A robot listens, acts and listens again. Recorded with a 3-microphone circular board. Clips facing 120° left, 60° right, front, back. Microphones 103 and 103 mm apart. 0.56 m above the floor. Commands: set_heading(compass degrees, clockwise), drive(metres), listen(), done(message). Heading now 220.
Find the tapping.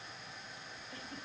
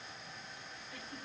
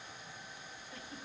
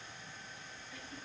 listen()
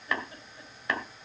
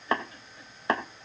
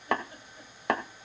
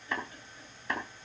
done("Found it: tapping, straight ahead, 2 to 4 m away.")